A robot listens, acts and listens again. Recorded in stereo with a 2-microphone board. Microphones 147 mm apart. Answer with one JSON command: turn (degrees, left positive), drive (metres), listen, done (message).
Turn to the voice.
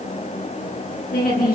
{"turn": 90}
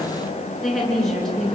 {"done": "Facing the woman speaking."}